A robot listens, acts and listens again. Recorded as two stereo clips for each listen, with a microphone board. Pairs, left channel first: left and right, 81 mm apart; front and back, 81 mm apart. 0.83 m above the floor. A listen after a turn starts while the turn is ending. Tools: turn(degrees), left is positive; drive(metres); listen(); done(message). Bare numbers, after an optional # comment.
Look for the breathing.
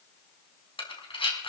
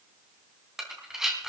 # The breathing: 95° left.
turn(95)
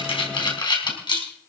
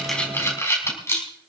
# The breathing is now 60° left.
turn(60)
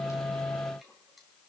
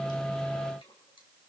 listen()
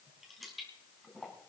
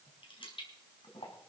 listen()
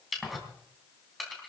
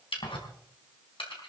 done("Facing the breathing.")